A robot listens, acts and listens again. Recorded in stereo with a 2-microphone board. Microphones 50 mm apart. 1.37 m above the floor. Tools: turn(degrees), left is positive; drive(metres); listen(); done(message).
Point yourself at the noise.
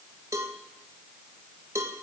turn(degrees=-90)
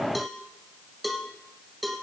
done("Found it: a cowbell, straight ahead, 1 to 2 m away.")